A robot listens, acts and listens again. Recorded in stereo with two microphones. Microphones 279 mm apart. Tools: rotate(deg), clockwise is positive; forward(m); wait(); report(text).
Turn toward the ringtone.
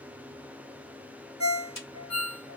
rotate(-90)
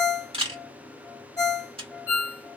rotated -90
rotate(-10)
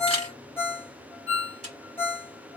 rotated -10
report("Facing the ringtone, 1 to 2 m away.")